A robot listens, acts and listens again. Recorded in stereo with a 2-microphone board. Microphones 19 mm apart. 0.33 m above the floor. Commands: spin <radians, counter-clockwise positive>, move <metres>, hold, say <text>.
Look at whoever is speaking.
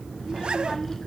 spin 0.35
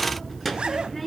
say Found it: a child speaking, straight ahead.